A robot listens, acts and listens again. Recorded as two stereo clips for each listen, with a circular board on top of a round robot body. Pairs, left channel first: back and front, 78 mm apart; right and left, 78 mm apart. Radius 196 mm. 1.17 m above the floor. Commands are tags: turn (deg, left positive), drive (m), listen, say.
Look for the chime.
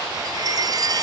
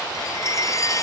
<turn deg="-40"/>
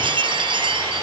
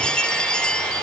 <turn deg="-10"/>
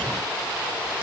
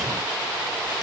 <listen/>
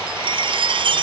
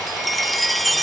<say>Found it: a chime, straight ahead.</say>